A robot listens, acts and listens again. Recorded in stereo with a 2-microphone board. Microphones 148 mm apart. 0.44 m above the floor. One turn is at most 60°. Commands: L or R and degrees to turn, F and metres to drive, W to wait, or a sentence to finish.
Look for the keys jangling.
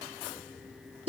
W
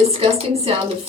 W
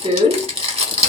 I can't make out keys jangling, only crumpling.